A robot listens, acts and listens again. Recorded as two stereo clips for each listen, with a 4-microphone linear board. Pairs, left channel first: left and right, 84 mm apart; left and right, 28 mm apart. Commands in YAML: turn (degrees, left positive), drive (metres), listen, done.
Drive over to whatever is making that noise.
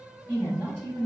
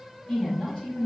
turn: 45
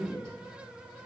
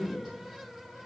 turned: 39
drive: 1.0
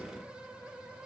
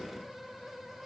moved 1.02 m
listen: true
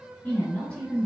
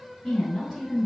turn: 15
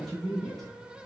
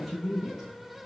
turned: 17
drive: 1.0
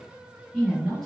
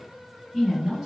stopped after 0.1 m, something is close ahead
done: "I am next to the woman speaking."